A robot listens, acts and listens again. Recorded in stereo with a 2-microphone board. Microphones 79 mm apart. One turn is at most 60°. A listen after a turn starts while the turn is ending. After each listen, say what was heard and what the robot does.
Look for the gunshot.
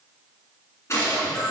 The gunshot: about 35° left or 145° left. Turn 35° left.
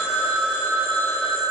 Keep listening.
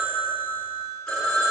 I heard a gunshot, but can't make it out now. It was about straight ahead or 110° left.